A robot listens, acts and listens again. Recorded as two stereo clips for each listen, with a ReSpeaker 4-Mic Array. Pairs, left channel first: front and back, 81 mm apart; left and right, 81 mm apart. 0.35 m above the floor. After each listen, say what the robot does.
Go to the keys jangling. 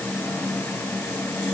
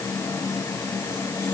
Keep listening.
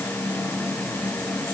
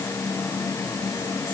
Keep listening.
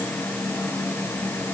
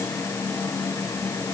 I can't make out keys jangling.